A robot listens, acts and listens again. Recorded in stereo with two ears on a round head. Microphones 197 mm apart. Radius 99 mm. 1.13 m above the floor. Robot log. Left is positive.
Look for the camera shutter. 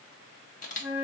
note: The camera shutter: about 35° left or 145° left.
cmd yaw +35
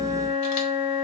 cmd idle
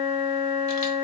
cmd idle
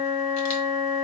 end: I heard a camera shutter, but can't make it out now. It was about straight ahead or 110° left.